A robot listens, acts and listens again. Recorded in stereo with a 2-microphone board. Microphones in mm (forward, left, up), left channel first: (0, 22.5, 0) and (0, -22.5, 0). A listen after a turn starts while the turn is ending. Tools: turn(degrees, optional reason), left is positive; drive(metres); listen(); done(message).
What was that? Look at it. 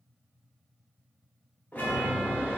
turn(degrees=50, reason="The chime: about 50° left or 130° left.")
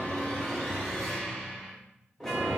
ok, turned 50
turn(degrees=10, reason="So it is at 10° left.")
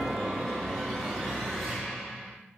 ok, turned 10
done("Facing the chime.")